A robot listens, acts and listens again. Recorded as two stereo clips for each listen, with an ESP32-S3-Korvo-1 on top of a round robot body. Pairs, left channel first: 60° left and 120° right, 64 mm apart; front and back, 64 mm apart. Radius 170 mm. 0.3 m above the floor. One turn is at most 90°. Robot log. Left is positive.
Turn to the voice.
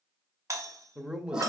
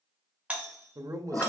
note: The man speaking: 165° left.
cmd yaw +90
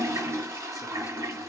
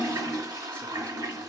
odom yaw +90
note: Nothing new. It was at 75° left.
cmd yaw +75
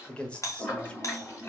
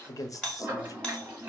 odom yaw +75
note: The man speaking is now 10° right.
cmd yaw -10
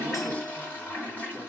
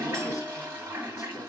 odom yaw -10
cmd idle
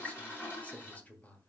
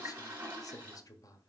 end: Facing the man speaking, 1 to 2 m away.